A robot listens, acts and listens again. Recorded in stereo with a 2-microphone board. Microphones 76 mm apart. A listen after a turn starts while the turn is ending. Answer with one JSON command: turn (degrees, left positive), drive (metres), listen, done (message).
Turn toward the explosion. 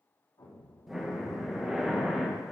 {"turn": 70}
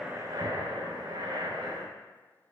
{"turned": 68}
{"listen": true}
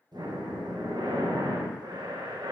{"done": "I heard an explosion, but can't make it out now. It was about 5° left or 40° left."}